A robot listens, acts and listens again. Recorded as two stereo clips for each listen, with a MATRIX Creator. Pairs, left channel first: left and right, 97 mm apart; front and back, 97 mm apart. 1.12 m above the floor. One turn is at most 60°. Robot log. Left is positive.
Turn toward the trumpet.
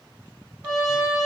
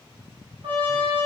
note: The trumpet: 150° right.
cmd yaw -60
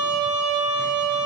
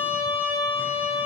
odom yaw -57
note: The trumpet is now 90° right.
cmd yaw -60
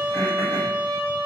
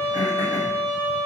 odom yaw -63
note: The trumpet is now 30° right.
cmd yaw -30
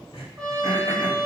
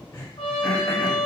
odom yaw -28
end: Found it: a trumpet, straight ahead, 1 to 2 m away.